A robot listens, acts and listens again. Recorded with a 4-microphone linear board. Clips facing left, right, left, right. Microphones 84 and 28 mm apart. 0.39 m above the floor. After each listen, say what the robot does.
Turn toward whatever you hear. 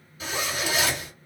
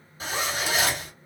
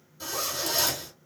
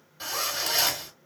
Turn 40° right.
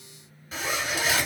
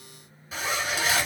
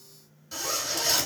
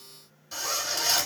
Found it: a zipper, straight ahead, 1 to 2 m away.